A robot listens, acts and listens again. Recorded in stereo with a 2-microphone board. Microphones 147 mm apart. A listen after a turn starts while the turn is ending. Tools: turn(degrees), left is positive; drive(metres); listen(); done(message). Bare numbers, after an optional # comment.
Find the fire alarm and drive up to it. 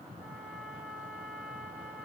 listen()
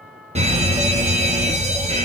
# The fire alarm: about 45° right or 135° right.
turn(-45)
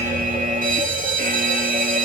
# So it is at 85° right.
turn(-85)
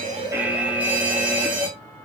# The fire alarm is now 10° right.
turn(-10)
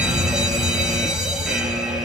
drive(1.0)
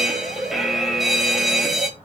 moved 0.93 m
drive(1.0)
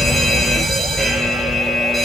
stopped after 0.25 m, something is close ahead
done("Arrived at the fire alarm, straight ahead.")